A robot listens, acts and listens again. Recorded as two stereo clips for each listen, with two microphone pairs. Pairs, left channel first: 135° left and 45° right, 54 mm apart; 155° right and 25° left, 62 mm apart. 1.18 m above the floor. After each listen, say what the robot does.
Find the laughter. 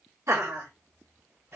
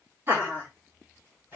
Turn 25° right.
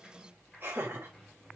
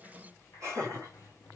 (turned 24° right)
Found it: laughter, straight ahead.